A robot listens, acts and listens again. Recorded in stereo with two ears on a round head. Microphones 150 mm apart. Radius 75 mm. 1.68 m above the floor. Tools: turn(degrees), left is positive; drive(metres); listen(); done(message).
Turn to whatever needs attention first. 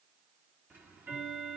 listen()
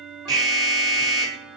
turn(degrees=-25)
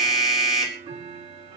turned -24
done("Found it: an alarm, straight ahead, over 4 m away.")